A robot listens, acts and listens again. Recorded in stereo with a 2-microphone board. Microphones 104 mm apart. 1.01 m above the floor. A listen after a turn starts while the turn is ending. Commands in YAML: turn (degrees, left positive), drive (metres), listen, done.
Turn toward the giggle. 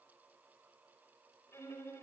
listen: true
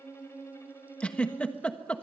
turn: 30
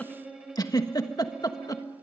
turn: 140
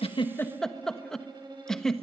done: "Found it: a giggle, straight ahead."